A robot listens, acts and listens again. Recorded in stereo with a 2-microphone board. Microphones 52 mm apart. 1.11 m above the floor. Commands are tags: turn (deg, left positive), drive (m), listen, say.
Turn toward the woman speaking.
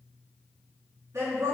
<turn deg="-55"/>
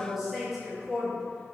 <turn deg="10"/>
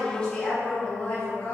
<turn deg="35"/>
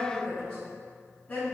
<turn deg="30"/>
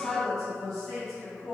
<say>Found it: a woman speaking, straight ahead.</say>